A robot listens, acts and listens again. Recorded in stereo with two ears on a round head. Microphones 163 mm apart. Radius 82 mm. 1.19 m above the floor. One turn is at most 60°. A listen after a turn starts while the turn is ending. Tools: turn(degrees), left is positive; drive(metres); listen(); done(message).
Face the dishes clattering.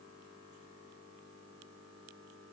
listen()
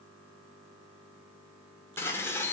turn(degrees=30)
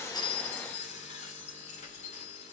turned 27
turn(degrees=60)
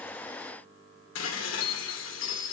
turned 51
turn(degrees=60)
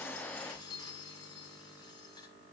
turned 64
turn(degrees=25)
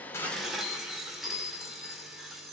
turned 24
done("Facing the dishes clattering.")